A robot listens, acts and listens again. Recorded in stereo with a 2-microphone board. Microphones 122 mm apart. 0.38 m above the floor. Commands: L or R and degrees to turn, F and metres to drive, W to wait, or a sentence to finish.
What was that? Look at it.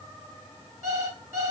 R25
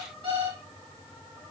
R130
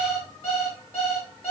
L15
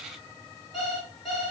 Facing the alarm clock, 2 to 4 m away.